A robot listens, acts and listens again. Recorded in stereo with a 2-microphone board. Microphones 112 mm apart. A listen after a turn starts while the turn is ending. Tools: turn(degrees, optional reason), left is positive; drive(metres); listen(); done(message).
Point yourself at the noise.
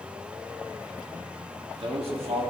turn(degrees=-65, reason="The man speaking: about 65° right or 115° right.")
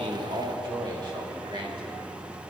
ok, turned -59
turn(degrees=-50, reason="So it is at 50° right.")
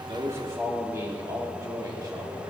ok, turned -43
turn(degrees=-35, reason="The man speaking is now 35° right.")
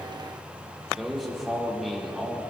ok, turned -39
done("Facing the man speaking, 2 to 4 m away.")